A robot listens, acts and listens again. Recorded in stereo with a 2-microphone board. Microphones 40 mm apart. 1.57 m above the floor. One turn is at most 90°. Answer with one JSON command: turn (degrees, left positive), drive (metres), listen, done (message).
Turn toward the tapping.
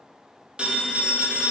{"listen": true}
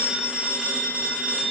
{"listen": true}
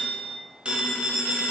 {"done": "I can't make out tapping, only a phone ringing."}